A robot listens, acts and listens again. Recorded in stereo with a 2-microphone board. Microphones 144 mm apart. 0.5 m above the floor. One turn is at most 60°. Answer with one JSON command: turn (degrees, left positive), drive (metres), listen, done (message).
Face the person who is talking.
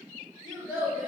{"turn": -30}
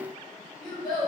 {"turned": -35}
{"turn": 30}
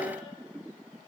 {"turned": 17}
{"turn": 10}
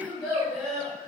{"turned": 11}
{"done": "Found it: a child speaking, straight ahead."}